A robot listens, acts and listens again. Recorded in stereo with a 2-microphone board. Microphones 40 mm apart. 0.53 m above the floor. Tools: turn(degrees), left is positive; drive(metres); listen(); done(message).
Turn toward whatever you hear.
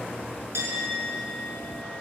turn(degrees=-90)
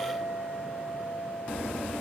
done("Facing the clink, over 4 m away.")